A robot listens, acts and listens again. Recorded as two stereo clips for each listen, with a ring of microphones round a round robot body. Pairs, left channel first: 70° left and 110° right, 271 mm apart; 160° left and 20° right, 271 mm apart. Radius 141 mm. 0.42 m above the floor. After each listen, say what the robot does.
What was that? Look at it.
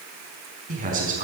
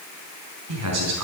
Turn 50° right.
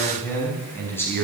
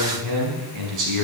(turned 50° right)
Turn 15° right.
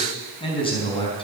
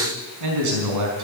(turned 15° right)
Facing the man speaking, over 4 m away.